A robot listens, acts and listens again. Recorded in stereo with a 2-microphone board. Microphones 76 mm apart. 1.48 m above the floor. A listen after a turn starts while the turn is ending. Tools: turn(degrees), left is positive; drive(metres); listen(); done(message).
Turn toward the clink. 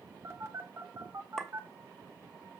turn(degrees=30)
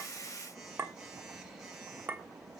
turn(degrees=-25)
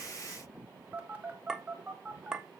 turn(degrees=-10)
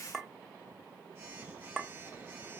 done("Found it: a clink, straight ahead, 1 to 2 m away.")